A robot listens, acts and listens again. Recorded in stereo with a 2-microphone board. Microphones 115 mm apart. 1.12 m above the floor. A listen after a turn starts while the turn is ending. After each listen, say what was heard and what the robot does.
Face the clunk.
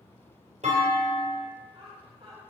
Turn 90° right.
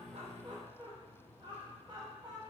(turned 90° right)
I heard a clunk from this way, but can't make it out now.